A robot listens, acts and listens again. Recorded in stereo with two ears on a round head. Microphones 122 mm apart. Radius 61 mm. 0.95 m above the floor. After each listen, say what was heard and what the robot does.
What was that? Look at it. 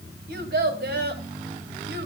Turn 90° right.
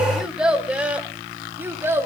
So it is at 20° right. Turn 20° right.
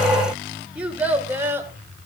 The child speaking is now 20° right. Turn 20° right.
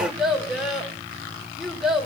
Found it: a child speaking, straight ahead, 2 to 4 m away.